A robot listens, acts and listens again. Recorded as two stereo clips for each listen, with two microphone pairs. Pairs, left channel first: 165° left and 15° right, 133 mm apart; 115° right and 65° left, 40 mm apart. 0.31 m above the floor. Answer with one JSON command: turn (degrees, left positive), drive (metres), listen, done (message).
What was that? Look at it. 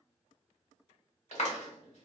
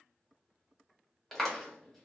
{"turn": 165}
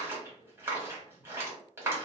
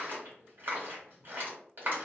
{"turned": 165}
{"turn": 55}
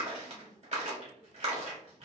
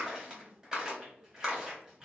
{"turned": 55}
{"done": "Found it: a clap, straight ahead."}